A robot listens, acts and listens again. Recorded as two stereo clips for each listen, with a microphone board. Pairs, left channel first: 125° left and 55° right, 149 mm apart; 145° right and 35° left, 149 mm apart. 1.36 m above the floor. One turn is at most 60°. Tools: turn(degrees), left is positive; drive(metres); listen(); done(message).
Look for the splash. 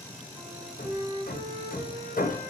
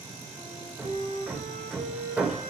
listen()
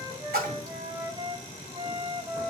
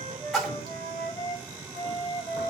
turn(degrees=-55)
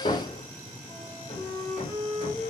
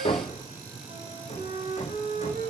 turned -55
done("Facing where the splash came from. I can't hear it now.")